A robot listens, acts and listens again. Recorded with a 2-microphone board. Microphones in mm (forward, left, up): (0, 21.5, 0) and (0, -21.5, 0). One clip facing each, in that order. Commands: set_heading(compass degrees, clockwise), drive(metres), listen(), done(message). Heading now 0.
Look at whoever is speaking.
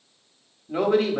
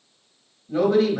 set_heading(330)
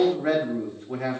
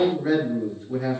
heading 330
set_heading(215)
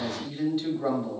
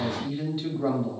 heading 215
set_heading(225)
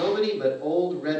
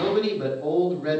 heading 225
done("Facing the man speaking.")